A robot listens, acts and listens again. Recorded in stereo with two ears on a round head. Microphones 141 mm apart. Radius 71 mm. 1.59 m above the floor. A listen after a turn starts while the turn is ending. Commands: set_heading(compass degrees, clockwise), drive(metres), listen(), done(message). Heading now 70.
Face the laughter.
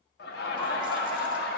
set_heading(0)
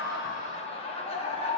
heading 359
set_heading(319)
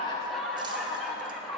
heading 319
done("Facing the laughter.")